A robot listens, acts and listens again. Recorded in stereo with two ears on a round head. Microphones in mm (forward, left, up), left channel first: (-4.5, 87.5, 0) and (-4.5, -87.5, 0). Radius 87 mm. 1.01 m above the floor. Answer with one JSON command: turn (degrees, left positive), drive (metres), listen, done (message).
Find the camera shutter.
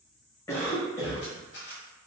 {"turn": 65}
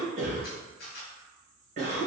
{"turn": 50}
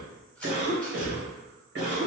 {"listen": true}
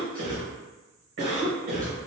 {"listen": true}
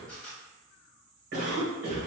{"done": "Found it: a camera shutter, straight ahead."}